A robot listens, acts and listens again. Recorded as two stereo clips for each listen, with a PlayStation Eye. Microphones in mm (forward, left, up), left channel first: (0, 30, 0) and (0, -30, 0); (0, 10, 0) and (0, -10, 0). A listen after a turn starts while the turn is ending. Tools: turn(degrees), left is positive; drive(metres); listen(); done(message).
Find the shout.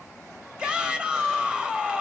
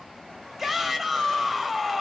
turn(degrees=-15)
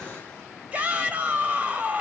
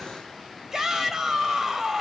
turn(degrees=-155)
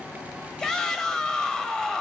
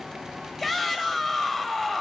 turn(degrees=10)
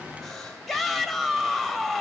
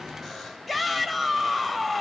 done("Found it: a shout, straight ahead.")